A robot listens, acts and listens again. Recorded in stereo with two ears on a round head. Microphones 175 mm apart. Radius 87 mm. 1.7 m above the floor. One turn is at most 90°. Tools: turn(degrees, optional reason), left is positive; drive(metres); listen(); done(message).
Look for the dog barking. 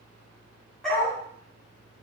turn(degrees=30)
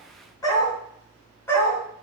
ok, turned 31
turn(degrees=30)
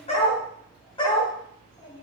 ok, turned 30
turn(degrees=90, reason="So it is at 155° left.")
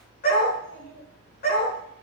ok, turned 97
turn(degrees=50, reason="The dog barking is now 50° left.")
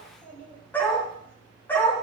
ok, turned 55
turn(degrees=10, reason="The dog barking is now 10° left.")
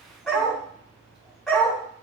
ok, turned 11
done("Found it: a dog barking, straight ahead.")